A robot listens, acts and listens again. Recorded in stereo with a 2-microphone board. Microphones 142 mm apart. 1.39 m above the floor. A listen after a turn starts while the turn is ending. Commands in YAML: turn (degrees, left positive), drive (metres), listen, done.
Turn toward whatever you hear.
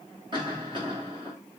turn: -35
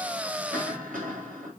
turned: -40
turn: -110
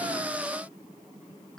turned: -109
done: "Found it: a cough, straight ahead."